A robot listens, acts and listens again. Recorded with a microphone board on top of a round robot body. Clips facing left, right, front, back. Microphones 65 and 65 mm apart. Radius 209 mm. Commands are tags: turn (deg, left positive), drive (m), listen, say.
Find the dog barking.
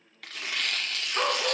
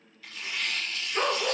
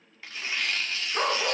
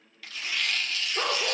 <turn deg="15"/>
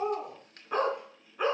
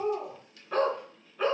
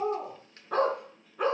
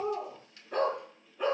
<turn deg="15"/>
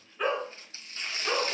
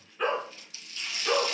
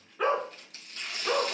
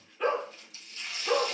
<say>Found it: a dog barking, straight ahead.</say>